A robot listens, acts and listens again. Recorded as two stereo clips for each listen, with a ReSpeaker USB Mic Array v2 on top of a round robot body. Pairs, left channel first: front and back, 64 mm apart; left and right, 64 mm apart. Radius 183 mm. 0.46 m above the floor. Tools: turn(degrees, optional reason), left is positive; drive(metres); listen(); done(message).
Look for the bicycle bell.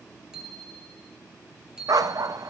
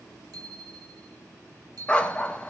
turn(degrees=-100, reason="The bicycle bell: 100° right.")
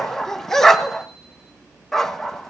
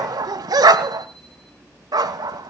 listen()
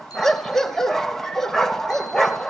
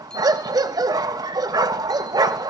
listen()
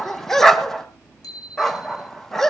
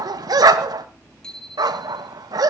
turn(degrees=10, reason="The bicycle bell is now 10° left.")
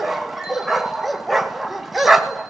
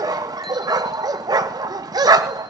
listen()
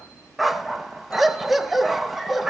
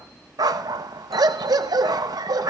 listen()
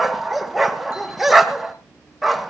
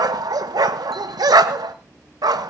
done("I heard a bicycle bell from this way, but can't make it out now.")